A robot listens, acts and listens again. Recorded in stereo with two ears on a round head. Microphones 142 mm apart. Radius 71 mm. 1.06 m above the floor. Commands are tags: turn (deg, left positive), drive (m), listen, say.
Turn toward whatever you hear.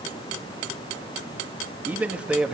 <turn deg="-30"/>
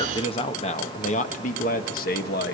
<turn deg="65"/>
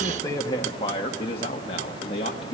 <turn deg="35"/>
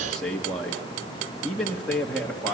<say>Found it: a man speaking, straight ahead.</say>